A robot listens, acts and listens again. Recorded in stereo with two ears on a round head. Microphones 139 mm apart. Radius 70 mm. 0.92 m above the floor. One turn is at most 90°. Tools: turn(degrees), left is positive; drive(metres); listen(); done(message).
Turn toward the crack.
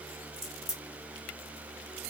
turn(degrees=30)
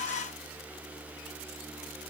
listen()
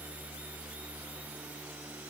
done("I heard a crack, but can't make it out now. It was about 30° right or 150° left.")